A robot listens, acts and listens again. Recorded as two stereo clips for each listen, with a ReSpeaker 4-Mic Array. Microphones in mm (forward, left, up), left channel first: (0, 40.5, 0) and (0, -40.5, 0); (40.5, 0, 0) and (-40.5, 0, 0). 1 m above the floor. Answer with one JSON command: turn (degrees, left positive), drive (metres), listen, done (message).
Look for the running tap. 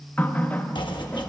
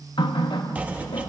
{"turn": 20}
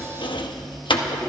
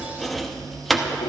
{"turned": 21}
{"listen": true}
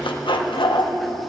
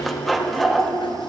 {"listen": true}
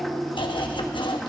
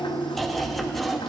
{"done": "Found it: a running tap, straight ahead."}